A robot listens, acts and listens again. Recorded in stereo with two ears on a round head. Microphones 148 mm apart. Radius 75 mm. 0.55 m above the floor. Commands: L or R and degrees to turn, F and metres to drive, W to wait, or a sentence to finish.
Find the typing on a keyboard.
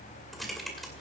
L30
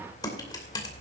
L150
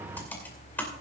L15
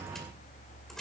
W
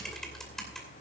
Found it: typing on a keyboard, straight ahead.